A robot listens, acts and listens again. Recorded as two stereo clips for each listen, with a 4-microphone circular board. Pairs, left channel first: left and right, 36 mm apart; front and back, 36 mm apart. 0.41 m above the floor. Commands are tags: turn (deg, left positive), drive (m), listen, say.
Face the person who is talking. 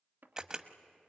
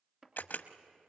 <listen/>
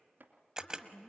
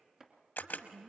<turn deg="140"/>
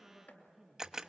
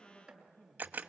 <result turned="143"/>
<say>Facing the woman speaking, over 4 m away.</say>